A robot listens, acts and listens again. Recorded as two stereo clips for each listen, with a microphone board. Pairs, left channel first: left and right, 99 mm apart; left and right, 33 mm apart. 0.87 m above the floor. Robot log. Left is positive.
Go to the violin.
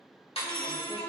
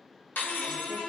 note: The violin: about 20° left or 160° left.
cmd yaw +20
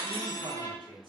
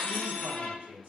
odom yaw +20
note: So it is at 140° left.
cmd yaw +140
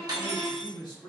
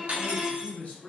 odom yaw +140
note: The violin is now 25° left.
cmd yaw +25
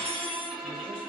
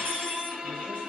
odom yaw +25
cmd fwd 1.0
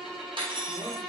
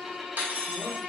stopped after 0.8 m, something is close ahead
end: I am next to the violin.